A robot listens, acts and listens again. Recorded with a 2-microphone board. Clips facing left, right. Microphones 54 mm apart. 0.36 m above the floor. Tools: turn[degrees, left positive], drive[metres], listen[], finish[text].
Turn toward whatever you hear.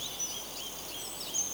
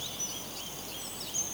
Action: listen[]
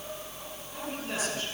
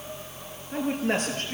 Thought: The man speaking: about 50° right or 130° right.
Action: turn[-50]
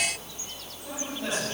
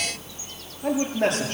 Thought: So it is at 75° right.
Action: turn[-75]
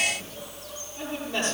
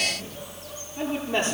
Thought: The man speaking is now 30° right.
Action: turn[-30]
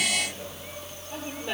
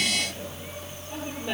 Action: finish[Facing the man speaking.]